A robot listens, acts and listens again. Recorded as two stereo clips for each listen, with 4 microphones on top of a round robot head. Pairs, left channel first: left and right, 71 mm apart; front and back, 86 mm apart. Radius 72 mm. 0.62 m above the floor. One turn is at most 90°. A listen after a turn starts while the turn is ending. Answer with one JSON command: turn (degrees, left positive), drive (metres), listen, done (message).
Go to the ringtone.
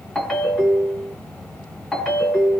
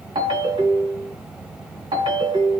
{"turn": 90}
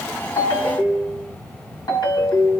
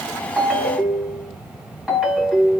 {"turn": 90}
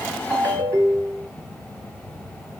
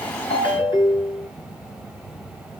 {"turn": -30}
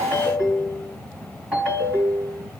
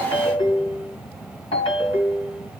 {"turn": -15}
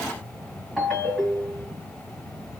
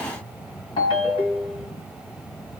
{"drive": 1.0}
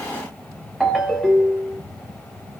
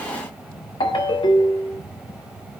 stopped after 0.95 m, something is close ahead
{"done": "I am next to the ringtone."}